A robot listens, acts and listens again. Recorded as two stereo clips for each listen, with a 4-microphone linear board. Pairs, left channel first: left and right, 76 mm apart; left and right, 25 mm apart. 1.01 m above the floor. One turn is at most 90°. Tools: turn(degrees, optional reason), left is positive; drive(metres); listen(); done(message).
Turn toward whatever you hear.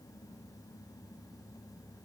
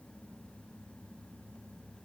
listen()
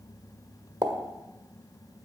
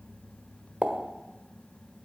turn(degrees=-70, reason="The pop: about 70° right or 110° right.")
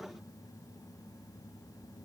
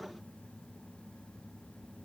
listen()
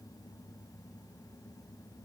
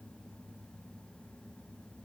done("I heard a pop, but can't make it out now. It was about straight ahead or 40° right.")